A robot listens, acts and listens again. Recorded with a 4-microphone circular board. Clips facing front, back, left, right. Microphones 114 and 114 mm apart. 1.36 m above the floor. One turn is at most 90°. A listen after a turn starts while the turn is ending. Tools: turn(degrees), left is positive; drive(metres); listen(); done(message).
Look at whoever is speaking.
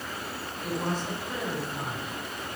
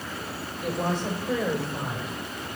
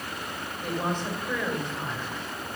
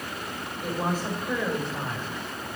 turn(degrees=-90)
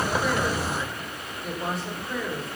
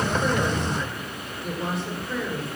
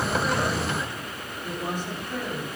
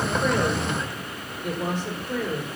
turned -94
turn(degrees=-90)
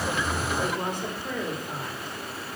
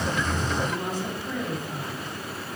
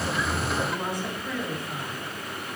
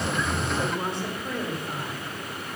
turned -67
turn(degrees=-30)
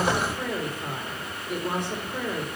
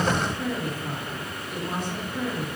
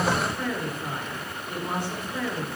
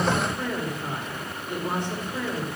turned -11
turn(degrees=-20)
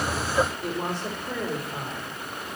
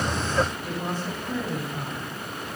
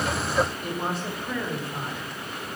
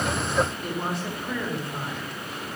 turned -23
done("Facing the woman speaking.")